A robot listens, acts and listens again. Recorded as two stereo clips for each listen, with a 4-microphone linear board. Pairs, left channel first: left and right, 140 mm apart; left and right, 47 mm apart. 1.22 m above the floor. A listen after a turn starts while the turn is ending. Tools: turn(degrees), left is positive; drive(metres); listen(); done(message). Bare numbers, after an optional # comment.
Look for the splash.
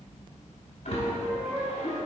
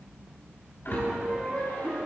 # The splash: about 70° left or 110° left.
turn(70)
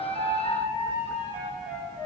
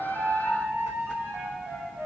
listen()
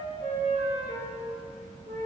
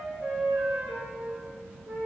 done("I heard a splash, but can't make it out now. It was about straight ahead or 40° left.")